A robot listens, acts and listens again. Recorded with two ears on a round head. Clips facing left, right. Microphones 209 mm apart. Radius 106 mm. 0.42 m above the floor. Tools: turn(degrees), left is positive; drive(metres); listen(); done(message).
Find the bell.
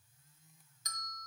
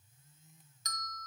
turn(degrees=-60)
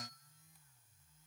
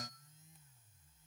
listen()
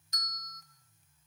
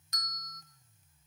turn(degrees=-50)
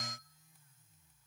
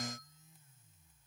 listen()
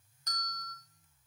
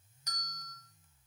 turn(degrees=-10)
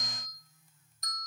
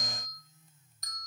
done("Facing the bell, 1 to 2 m away.")